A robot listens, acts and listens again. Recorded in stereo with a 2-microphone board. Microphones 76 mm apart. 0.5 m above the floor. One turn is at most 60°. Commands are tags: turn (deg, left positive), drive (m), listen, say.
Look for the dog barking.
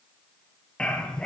<turn deg="30"/>
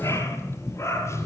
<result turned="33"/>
<turn deg="60"/>
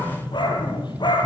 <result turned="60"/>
<turn deg="60"/>
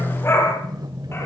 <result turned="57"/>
<turn deg="35"/>
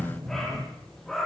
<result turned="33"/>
<say>Facing the dog barking, over 4 m away.</say>